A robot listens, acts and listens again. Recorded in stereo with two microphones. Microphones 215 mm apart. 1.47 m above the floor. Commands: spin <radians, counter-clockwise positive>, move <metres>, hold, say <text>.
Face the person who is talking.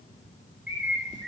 hold
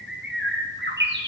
hold
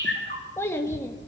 spin 0.52
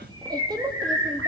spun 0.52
spin -0.35
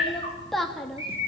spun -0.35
say Facing the child speaking, 2 to 4 m away.